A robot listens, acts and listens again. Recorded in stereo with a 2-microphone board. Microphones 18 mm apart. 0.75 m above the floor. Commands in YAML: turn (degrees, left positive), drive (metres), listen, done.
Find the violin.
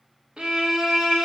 turn: -90
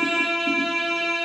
done: "Found it: a violin, straight ahead."